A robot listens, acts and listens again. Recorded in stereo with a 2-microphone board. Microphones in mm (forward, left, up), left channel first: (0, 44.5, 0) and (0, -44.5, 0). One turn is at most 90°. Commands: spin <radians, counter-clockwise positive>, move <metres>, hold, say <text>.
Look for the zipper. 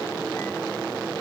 hold
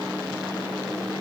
hold
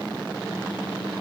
say I can't make out a zipper.